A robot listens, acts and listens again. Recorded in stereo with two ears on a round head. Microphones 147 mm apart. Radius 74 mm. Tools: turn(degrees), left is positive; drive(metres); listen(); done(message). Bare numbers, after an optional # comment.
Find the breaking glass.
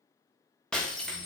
turn(30)
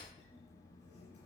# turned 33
listen()
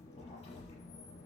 done("I heard breaking glass, but can't make it out now. It was about 30° right or 140° left.")